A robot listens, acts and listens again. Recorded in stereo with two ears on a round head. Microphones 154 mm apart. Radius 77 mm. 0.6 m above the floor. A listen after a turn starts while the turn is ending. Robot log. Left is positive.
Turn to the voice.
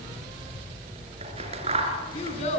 note: The child speaking: about 40° left or 140° left.
cmd yaw +40
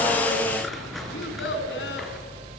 note: So it is at 100° left.
cmd yaw +100
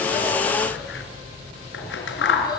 cmd idle
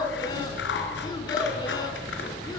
cmd idle
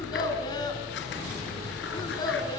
note: The child speaking is now 25° left.
cmd yaw +25
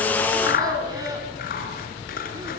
note: The child speaking is now 20° right.
cmd yaw -20
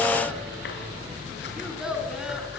end: Facing the child speaking, over 4 m away.